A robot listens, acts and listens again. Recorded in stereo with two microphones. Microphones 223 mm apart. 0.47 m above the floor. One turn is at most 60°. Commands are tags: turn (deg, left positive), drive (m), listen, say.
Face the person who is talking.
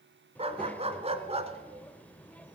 <turn deg="30"/>
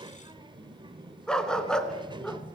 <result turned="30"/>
<turn deg="-25"/>
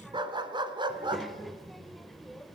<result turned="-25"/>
<say>Facing the child speaking.</say>